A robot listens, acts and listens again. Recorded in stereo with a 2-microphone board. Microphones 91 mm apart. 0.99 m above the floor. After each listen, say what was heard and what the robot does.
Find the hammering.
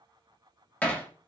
Turn 30° left.
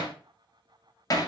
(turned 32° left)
So it is at 135° left. Turn 135° left.
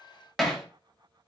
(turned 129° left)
Found it: hammering, straight ahead.